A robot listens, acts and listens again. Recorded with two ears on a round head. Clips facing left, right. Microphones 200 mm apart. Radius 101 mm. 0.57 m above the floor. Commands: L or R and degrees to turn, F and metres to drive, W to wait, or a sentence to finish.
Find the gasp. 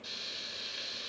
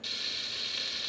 W
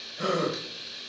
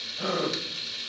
L25
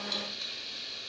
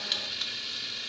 W
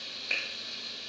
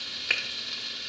I heard a gasp, but can't make it out now. It was about straight ahead or 130° left.